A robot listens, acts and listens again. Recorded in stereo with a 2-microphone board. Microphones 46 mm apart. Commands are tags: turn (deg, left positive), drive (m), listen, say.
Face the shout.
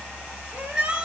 <turn deg="-20"/>
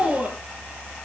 <turn deg="-145"/>
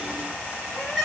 <say>Facing the shout, over 4 m away.</say>